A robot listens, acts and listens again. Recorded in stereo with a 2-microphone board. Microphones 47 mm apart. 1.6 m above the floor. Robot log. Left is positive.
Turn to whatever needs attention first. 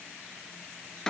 cmd idle
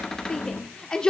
note: The shout: about 20° left or 160° left.
cmd yaw +20
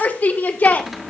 note: So it is at 140° left.
cmd yaw +140
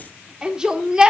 note: The shout is now 20° right.
cmd yaw -20
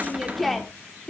end: Facing the shout, 1 to 2 m away.